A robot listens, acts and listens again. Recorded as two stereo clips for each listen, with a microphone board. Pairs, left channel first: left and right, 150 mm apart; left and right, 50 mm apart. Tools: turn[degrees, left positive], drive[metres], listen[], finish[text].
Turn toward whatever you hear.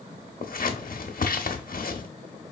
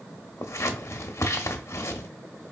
Action: turn[90]
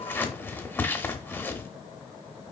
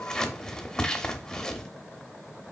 Thought: So it is at 15° left.
Action: turn[15]
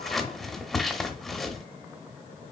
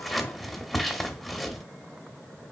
Action: finish[Found it: scissors, straight ahead.]